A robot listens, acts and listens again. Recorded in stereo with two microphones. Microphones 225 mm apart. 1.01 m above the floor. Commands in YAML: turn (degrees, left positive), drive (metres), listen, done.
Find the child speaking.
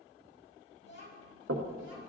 turn: 55
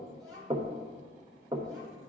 done: "Facing the child speaking, over 4 m away."